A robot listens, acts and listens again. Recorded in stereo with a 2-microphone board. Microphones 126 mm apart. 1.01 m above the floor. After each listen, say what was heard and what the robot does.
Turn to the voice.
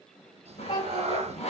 The child speaking: about 35° left or 145° left. Turn 35° left.
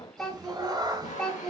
Facing the child speaking.